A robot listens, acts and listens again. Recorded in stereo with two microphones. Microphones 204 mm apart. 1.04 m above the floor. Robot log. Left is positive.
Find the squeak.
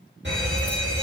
cmd idle
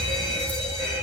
cmd idle
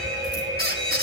note: The squeak: about 50° right or 130° right.
cmd yaw -50
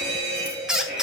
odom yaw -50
end: Facing the squeak.